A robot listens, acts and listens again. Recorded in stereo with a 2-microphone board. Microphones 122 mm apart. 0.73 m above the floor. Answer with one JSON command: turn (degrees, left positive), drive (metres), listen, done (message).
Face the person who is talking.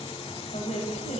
{"turn": 90}
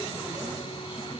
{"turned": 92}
{"listen": true}
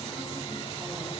{"listen": true}
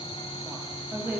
{"turn": -15}
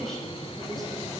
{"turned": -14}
{"done": "Facing the woman speaking, over 4 m away."}